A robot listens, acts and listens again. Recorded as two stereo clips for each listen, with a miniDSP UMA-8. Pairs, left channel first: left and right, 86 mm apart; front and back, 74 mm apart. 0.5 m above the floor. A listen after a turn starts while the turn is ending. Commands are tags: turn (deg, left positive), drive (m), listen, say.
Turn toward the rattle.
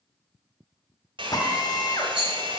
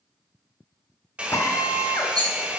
<turn deg="-170"/>
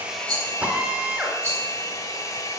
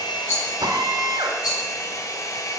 <turn deg="-25"/>
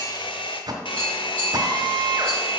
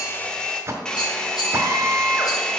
<listen/>
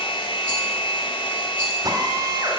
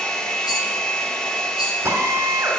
<listen/>
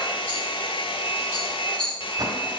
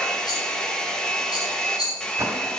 <turn deg="15"/>
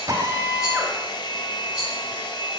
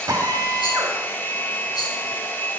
<listen/>
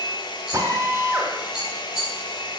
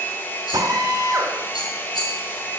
<say>Facing the rattle, 2 to 4 m away.</say>